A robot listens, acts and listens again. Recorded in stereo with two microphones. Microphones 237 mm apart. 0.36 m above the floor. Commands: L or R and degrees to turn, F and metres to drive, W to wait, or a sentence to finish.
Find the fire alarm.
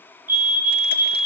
L55
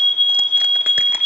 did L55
L65
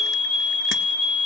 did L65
L20
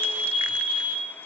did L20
Facing the fire alarm.